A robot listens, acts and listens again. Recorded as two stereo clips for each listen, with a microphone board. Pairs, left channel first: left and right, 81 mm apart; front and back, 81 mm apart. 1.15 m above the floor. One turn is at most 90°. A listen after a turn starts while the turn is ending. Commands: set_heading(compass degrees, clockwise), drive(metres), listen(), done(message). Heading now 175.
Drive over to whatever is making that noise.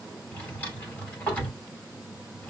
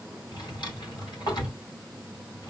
set_heading(155)
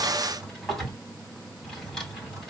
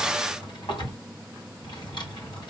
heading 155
drive(1.0)
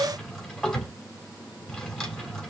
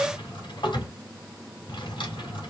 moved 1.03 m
set_heading(145)
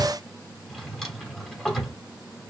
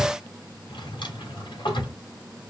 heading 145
drive(1.0)
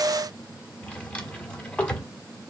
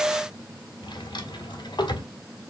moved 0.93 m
set_heading(130)
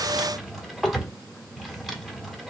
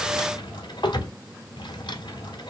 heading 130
drive(1.0)
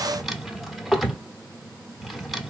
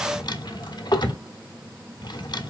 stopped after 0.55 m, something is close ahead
done("Arrived at the drawer, straight ahead.")